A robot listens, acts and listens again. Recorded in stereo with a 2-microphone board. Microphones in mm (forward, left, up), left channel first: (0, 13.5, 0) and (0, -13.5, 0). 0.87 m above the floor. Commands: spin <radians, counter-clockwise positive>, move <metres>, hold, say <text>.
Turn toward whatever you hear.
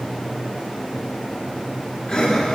spin 0.70
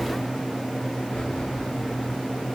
hold
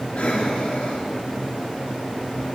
spin 1.66
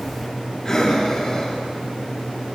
spin 0.52
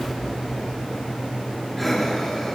say Facing the breathing, 2 to 4 m away.